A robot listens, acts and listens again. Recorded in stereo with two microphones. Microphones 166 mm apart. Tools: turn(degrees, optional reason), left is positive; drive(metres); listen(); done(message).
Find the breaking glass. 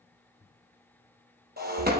turn(degrees=-70, reason="The breaking glass: about 70° right or 110° right.")
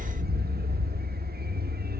listen()
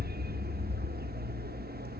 done("I heard breaking glass, but can't make it out now. It was about straight ahead or 40° right.")